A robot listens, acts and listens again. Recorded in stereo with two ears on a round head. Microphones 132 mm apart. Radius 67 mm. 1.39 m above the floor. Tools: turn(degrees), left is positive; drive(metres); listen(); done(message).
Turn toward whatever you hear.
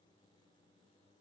listen()
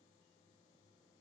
listen()
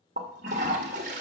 turn(degrees=-50)
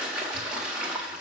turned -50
done("Found it: a toilet flushing, straight ahead.")